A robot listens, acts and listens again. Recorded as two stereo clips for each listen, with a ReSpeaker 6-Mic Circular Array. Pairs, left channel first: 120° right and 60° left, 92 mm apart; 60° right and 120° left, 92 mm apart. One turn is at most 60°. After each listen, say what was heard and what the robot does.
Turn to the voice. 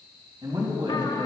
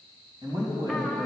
The man speaking: 80° left. Turn 60° left.
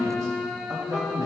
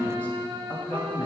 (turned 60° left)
The man speaking is now 10° left. Turn 10° left.
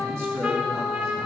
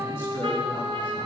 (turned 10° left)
Keep listening.
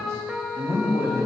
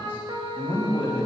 Facing the man speaking, 2 to 4 m away.